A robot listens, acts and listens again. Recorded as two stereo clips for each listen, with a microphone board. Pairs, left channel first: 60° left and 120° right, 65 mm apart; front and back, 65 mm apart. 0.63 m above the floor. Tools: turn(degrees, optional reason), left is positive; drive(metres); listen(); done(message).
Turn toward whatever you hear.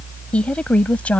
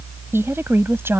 turn(degrees=130, reason="The woman speaking: 130° left.")
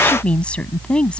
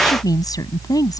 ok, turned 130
turn(degrees=-15, reason="The woman speaking is now 15° right.")
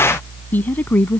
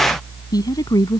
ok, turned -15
done("Facing the woman speaking.")